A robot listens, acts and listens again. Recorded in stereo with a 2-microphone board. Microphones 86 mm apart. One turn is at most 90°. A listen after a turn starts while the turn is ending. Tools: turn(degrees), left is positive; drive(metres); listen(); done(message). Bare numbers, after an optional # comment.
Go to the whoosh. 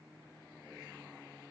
listen()
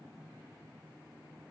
listen()
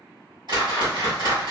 # The whoosh: about 65° right or 115° right.
turn(-65)
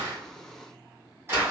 # So it is at 35° right.
turn(-35)
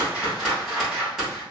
drive(1.0)
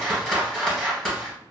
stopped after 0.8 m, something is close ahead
done("I am next to the whoosh.")